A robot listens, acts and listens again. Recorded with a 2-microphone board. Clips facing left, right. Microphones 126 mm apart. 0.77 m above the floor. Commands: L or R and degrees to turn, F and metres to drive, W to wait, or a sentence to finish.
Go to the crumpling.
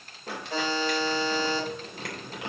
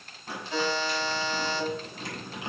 L90
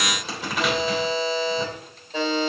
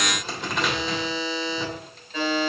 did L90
F1.0
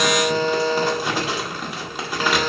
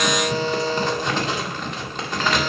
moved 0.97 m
L10
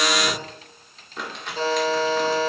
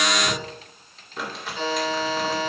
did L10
F1.0
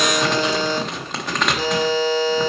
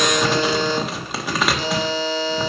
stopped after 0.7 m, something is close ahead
I am next to the crumpling.